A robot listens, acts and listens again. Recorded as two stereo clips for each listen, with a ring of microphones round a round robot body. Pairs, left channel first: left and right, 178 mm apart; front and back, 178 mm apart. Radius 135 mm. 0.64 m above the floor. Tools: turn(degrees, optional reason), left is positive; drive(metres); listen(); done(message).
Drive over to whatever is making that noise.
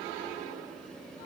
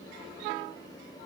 listen()
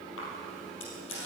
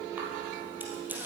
listen()
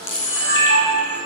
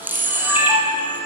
turn(degrees=100, reason="The camera shutter: 100° left.")
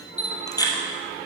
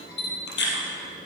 turn(degrees=20, reason="The camera shutter is now 20° left.")
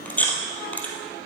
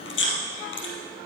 turn(degrees=10, reason="The camera shutter is now 10° left.")
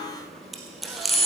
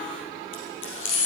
drive(metres=1.0)
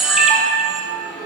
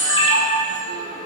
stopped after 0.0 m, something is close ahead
done("Something is in my way. I am facing the camera shutter but have not reached it.")